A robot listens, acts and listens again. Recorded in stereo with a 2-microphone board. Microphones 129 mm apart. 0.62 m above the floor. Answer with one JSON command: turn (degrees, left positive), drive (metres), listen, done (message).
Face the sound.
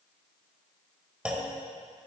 {"turn": -30}
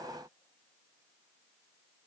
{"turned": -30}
{"listen": true}
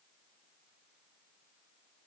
{"done": "I heard a clunk, but can't make it out now. It was about 20° left or 140° right."}